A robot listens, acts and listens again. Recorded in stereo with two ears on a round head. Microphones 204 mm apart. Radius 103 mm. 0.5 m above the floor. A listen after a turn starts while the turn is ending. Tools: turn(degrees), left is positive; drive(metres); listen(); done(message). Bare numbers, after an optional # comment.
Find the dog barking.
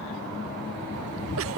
listen()
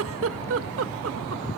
listen()
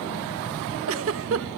done("I can't make out a dog barking, only a giggle.")